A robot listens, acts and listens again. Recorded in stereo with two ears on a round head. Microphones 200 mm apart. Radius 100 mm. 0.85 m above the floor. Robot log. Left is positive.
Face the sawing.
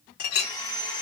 note: The sawing: about 15° left or 165° left.
cmd yaw +15
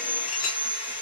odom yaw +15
note: So it is at 155° left.
cmd yaw +155
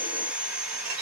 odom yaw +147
end: Found it: sawing, straight ahead, 1 to 2 m away.